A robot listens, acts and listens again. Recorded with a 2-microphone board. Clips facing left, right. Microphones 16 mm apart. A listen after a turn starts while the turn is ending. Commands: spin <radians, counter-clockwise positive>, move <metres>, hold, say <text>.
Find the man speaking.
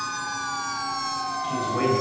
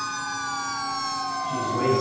spin 0.61
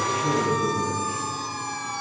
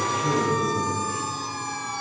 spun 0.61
say Found it: a man speaking, straight ahead, 2 to 4 m away.